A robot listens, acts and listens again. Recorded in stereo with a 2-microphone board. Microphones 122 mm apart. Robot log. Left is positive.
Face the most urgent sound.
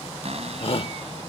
note: The shout: about 50° left or 130° left.
cmd yaw +50
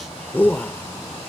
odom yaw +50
note: So it is at 20° left.
cmd yaw +20
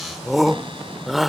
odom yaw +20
end: Found it: a shout, straight ahead.